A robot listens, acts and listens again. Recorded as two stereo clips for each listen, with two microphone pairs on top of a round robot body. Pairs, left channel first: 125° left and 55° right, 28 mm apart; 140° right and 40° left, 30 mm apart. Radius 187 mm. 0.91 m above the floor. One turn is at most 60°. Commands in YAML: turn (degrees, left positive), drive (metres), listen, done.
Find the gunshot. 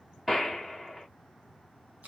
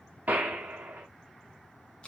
turn: 20
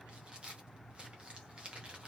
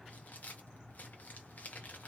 done: "Facing where the gunshot came from. I can't hear it now."